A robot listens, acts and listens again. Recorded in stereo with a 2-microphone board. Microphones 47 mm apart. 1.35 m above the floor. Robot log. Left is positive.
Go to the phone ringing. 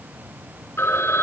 cmd yaw +90
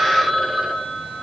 cmd fwd 1.0
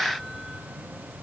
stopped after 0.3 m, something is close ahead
cmd idle
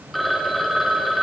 end: Blocked. The phone ringing is further on, straight ahead.